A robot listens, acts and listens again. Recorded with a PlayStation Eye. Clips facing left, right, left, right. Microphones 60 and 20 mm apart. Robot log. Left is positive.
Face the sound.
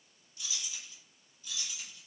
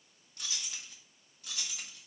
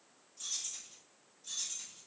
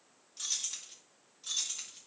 note: The keys jangling: about 70° right or 110° right.
cmd yaw -70
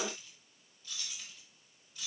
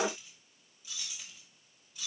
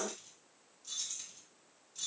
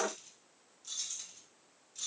end: Facing the keys jangling.